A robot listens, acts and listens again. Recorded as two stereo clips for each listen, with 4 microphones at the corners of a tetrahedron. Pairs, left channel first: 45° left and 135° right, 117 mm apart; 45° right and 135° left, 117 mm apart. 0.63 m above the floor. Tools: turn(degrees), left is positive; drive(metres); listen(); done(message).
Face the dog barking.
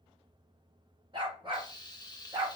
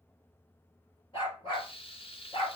turn(degrees=-85)
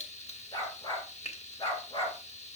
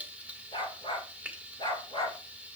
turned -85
done("Found it: a dog barking, straight ahead, 2 to 4 m away.")